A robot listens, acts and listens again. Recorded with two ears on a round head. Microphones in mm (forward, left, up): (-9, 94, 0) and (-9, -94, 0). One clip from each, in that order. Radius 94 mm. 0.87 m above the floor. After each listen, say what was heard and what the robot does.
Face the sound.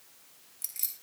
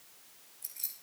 The keys jangling: about 65° left or 115° left. Turn 65° left.
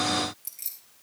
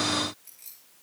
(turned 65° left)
So it is at 40° left. Turn 40° left.
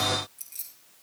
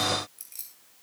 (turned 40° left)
Facing the keys jangling, 2 to 4 m away.